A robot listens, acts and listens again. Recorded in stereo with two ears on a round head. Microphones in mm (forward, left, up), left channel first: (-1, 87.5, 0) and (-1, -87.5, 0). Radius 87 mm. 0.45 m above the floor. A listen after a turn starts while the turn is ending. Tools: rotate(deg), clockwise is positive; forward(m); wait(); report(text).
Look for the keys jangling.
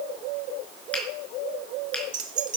rotate(45)
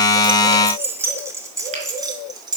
rotate(20)
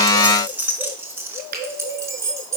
rotate(15)
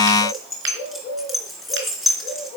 report("Found it: keys jangling, straight ahead, over 4 m away.")